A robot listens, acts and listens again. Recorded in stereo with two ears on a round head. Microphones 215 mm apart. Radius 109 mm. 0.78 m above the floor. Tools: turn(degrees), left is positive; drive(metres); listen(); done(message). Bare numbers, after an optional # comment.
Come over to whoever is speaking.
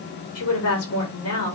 # The woman speaking: about 65° left or 115° left.
turn(65)
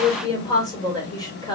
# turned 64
# So it is at 15° left.
turn(15)
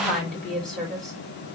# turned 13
drive(1.0)
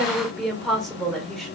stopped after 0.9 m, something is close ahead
done("I am next to the woman speaking.")